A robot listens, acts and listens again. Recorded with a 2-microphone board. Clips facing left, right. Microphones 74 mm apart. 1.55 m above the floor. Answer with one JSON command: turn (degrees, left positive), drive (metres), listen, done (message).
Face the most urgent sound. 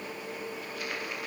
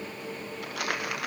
{"listen": true}
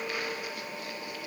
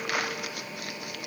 {"listen": true}
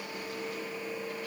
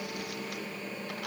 {"done": "I can't make out anything urgent, only crumpling."}